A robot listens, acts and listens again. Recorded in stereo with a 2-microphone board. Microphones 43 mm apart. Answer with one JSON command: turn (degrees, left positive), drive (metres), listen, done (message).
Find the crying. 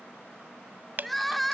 {"turn": 30}
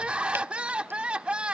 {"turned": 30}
{"turn": -25}
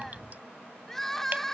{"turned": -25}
{"turn": 10}
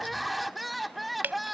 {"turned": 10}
{"done": "Found it: crying, straight ahead."}